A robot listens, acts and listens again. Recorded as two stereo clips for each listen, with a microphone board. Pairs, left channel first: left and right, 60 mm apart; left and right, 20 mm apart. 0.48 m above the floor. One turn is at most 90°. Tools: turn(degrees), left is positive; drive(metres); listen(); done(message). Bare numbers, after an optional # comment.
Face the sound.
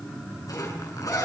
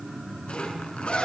turn(90)
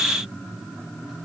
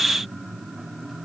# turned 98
# Nothing new. It was at 10° right.
turn(-10)
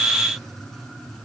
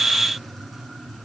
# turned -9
listen()
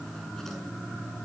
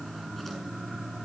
done("Facing where the zipper came from. I can't hear it now.")